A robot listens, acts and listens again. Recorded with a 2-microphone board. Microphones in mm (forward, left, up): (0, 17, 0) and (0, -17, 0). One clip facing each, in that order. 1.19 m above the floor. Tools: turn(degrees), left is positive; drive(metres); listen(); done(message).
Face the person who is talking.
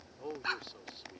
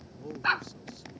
turn(degrees=30)
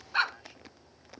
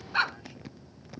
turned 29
listen()
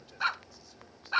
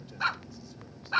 listen()
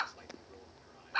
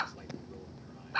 done("I heard a man speaking, but can't make it out now. It was about 5° left or 120° left.")